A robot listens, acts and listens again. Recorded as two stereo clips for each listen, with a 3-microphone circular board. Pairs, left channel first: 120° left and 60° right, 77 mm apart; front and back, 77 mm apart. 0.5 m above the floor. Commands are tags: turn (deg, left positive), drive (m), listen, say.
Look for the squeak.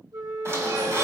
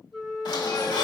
<turn deg="-10"/>
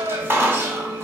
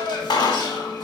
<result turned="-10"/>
<say>Facing the squeak.</say>